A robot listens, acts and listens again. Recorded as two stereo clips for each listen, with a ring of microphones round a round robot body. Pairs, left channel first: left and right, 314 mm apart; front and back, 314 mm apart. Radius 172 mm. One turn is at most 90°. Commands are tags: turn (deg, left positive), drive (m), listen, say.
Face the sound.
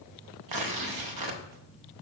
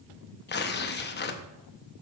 <turn deg="-60"/>
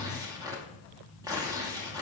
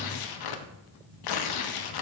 <turn deg="-10"/>
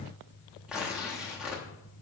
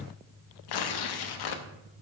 <say>Facing the tearing paper, under 1 m away.</say>